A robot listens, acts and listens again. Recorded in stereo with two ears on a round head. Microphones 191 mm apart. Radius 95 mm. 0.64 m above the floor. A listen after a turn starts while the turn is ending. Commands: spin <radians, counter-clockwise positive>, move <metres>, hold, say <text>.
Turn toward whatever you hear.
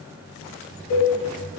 spin 1.57
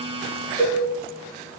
spin 0.26
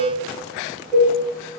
say Facing the cowbell, 1 to 2 m away.